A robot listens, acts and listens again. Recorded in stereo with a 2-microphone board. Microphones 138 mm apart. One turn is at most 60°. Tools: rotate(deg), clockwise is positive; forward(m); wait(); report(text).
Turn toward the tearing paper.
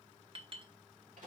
wait()
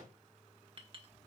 wait()
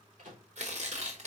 rotate(60)
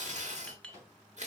rotate(60)
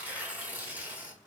rotate(15)
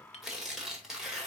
report("Facing the tearing paper, 1 to 2 m away.")